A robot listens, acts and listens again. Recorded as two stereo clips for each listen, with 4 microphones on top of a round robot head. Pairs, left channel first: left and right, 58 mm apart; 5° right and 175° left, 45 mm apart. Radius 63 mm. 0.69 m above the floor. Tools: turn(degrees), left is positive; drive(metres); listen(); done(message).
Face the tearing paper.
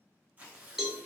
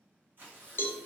turn(degrees=-150)
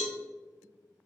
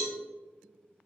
listen()
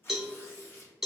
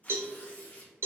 turn(degrees=45)
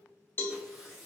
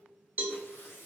done("Found it: tearing paper, straight ahead.")